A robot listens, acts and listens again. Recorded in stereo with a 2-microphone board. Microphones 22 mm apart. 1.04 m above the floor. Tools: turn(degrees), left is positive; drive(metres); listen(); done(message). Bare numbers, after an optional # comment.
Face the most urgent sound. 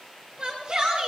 # The shout: about 35° right or 145° right.
turn(-35)
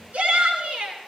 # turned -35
# So it is at 110° right.
turn(-110)
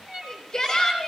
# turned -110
# The shout is now 25° left.
turn(25)
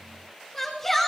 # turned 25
done("Found it: a shout, straight ahead.")